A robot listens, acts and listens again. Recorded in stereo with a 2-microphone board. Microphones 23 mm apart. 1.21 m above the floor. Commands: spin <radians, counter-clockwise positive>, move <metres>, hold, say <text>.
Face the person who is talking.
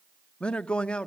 spin 0.96
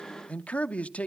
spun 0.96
spin 1.22
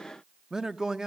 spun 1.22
spin -0.52
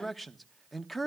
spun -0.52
say Facing the man speaking.